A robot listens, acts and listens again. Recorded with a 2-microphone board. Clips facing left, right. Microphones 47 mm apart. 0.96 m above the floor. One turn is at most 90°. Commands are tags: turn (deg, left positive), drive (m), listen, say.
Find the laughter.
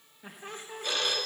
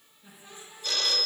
<turn deg="55"/>
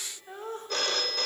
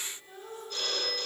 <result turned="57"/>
<turn deg="55"/>
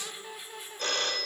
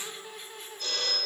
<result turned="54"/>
<say>Found it: laughter, straight ahead.</say>